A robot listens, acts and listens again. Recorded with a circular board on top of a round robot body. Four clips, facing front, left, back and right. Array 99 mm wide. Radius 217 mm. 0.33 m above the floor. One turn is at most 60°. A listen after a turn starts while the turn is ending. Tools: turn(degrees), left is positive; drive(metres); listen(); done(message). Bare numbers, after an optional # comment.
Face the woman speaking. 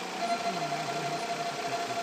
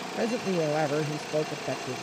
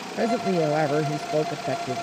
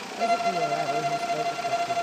# The woman speaking: 160° left.
turn(60)
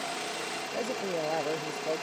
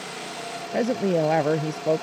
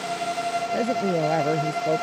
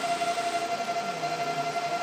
# The woman speaking is now 105° left.
turn(60)
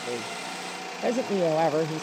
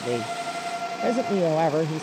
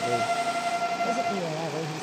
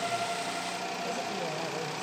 # The woman speaking is now 55° left.
turn(55)
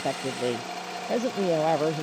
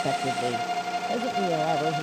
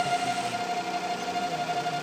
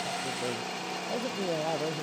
# The woman speaking is now 15° left.
turn(15)
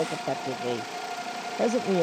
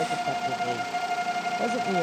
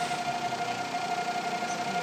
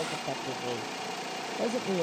done("Facing the woman speaking.")